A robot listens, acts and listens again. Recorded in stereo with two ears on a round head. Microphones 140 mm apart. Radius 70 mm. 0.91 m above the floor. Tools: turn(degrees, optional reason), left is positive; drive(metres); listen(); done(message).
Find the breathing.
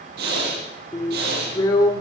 turn(degrees=-70, reason="The breathing: about 70° right or 110° right.")
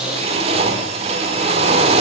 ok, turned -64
done("Found it: breathing, straight ahead.")